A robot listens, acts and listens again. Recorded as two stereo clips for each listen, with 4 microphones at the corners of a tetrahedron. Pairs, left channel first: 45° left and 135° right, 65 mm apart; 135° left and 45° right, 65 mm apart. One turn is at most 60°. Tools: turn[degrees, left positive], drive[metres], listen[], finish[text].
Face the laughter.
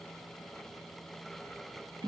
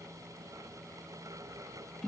Action: listen[]
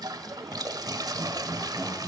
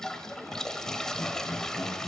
Thought: The laughter: 175° left.
Action: turn[60]
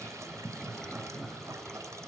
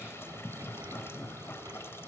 Thought: The laughter is now 145° left.
Action: turn[60]
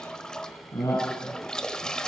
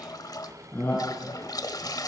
Thought: The laughter is now 85° left.
Action: turn[60]
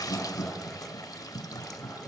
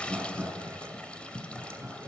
Thought: The laughter is now 20° left.
Action: turn[20]
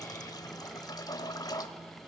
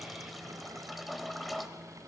Action: listen[]
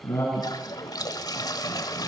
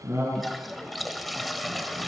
Action: finish[Found it: laughter, straight ahead, over 4 m away.]